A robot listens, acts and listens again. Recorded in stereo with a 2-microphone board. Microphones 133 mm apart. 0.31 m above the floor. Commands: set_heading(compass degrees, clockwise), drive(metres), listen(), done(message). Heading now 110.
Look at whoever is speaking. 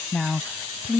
set_heading(140)
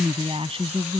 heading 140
set_heading(270)
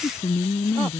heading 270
set_heading(245)
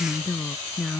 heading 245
done("Found it: a woman speaking, straight ahead.")